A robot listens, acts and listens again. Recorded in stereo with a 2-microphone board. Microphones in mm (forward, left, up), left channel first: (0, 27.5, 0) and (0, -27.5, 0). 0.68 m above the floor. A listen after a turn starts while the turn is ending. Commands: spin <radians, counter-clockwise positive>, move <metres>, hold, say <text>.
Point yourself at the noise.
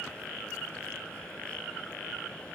hold
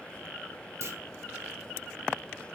spin -0.96
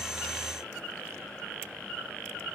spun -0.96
hold
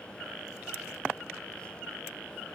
say I heard a clunk, but can't make it out now. It was about straight ahead or 70° right.